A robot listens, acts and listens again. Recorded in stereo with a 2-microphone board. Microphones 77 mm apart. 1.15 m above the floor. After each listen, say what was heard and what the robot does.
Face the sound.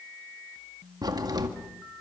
The crack: about 60° right or 120° right. Turn 60° right.
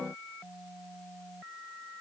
Keep listening.
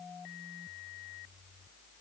I heard a crack, but can't make it out now. It was about straight ahead or 60° right.